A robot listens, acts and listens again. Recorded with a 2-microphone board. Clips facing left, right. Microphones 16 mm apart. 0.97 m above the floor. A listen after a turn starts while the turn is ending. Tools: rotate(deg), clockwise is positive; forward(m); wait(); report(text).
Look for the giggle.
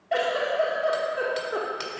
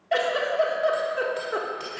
rotate(30)
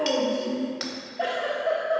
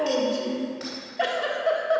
rotate(135)
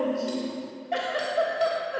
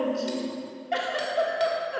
rotate(25)
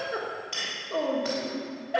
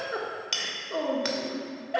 report("Facing the giggle.")